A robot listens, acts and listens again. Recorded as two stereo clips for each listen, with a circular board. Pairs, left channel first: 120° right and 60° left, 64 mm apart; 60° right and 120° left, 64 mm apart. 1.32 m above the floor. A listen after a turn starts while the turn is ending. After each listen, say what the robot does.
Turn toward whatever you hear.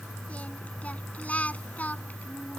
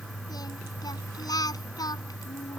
Turn 55° right.
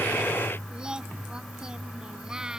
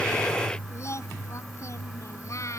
Turn 20° right.
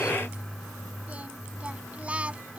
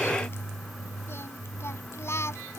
Turn 10° right.
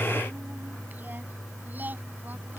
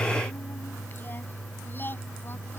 Keep listening.
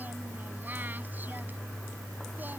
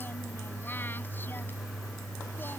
Keep listening.
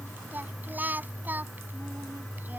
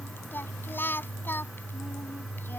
Found it: singing, straight ahead.